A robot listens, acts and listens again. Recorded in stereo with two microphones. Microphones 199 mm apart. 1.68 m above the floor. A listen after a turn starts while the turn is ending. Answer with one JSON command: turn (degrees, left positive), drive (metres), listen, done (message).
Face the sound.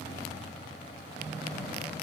{"listen": true}
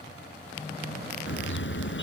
{"turn": 70}
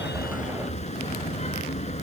{"turn": 35}
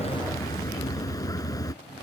{"turn": 20}
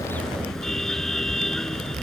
{"done": "Found it: a car horn, straight ahead."}